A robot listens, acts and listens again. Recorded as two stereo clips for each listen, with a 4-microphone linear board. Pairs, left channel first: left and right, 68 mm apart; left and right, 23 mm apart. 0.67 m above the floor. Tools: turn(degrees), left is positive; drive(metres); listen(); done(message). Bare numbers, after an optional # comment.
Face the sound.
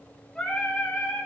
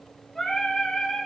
turn(30)
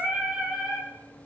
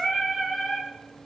done("Facing the singing, 2 to 4 m away.")